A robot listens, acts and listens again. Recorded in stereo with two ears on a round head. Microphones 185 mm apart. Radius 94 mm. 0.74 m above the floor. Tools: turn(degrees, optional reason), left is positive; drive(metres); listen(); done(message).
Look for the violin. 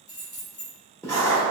listen()
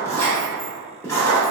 listen()
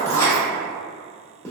done("I can't make out a violin, only keys jangling and writing.")